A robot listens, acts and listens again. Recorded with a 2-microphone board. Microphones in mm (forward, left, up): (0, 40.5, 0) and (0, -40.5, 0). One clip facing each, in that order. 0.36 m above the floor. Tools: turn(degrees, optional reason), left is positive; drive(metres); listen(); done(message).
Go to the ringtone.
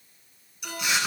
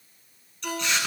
turn(degrees=-60, reason="The ringtone: about 60° right or 120° right.")
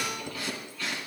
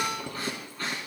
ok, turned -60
turn(degrees=-60, reason="So it is at 60° right.")
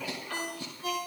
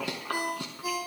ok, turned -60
turn(degrees=-15, reason="The ringtone is now 15° right.")
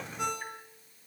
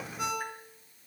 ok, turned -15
drive(metres=1.0)
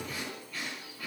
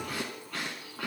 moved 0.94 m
listen()
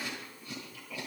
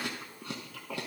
listen()
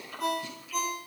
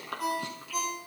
drive(metres=1.0)
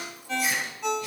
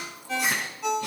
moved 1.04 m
drive(metres=1.0)
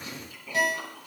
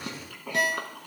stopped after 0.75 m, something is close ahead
done("I am next to the ringtone.")